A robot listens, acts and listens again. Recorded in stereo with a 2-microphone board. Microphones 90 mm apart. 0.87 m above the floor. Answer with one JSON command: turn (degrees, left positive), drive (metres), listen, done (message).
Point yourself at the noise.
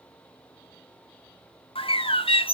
{"turn": 90}
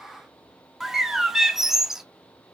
{"done": "Found it: a bird, straight ahead."}